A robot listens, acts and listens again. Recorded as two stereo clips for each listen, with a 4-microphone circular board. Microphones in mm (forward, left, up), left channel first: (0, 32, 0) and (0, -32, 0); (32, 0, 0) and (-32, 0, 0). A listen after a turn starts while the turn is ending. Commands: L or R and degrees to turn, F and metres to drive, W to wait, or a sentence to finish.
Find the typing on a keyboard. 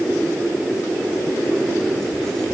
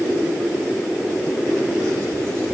W
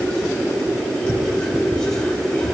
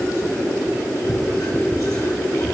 W
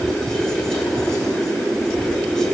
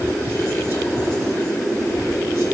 I can't make out typing on a keyboard to turn to.